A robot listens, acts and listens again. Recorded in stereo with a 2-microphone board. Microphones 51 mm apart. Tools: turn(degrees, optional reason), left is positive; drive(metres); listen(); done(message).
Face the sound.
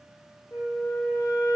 turn(degrees=65, reason="The flute: about 65° left or 115° left.")
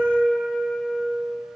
turn(degrees=25, reason="So it is at 25° left.")
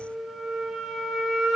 done("Found it: a flute, straight ahead, under 1 m away.")